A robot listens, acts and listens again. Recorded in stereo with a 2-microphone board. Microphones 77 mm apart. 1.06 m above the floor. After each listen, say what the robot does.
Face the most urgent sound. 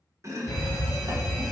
Turn 50° left.
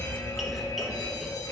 Turn 65° left.
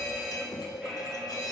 Facing the fire alarm.